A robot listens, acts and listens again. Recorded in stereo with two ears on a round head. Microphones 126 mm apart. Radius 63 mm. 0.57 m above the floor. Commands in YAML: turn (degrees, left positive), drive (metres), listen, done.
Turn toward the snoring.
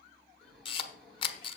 turn: 30
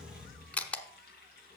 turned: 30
turn: 145
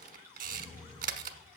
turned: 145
turn: 25
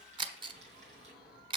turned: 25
done: "Found it: snoring, straight ahead, over 4 m away."